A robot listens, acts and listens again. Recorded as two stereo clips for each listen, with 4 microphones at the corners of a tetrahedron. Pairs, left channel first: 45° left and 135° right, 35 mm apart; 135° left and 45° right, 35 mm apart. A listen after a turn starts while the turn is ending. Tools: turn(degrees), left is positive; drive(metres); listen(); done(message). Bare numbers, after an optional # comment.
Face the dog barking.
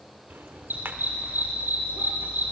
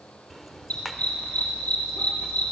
# The dog barking: 170° right.
turn(-170)
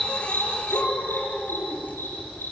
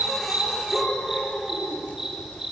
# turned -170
# The dog barking is now 35° left.
turn(35)
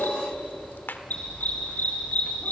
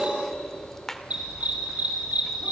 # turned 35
done("Found it: a dog barking, straight ahead, over 4 m away.")